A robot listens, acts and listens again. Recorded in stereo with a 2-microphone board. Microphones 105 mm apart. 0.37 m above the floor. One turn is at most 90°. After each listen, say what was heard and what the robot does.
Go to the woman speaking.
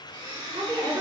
The woman speaking: about 75° right or 105° right. Turn 75° right.
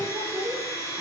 So it is at 15° right. Turn 15° right.
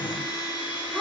Drive 1.0 m forward.
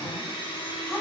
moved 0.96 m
Keep listening.
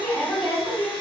Drive 1.0 m forward.
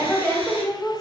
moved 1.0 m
Drive 1.0 m forward.
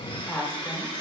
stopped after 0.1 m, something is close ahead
The woman speaking is now 10° left. Turn 10° left.
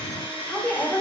Arrived at the woman speaking, straight ahead.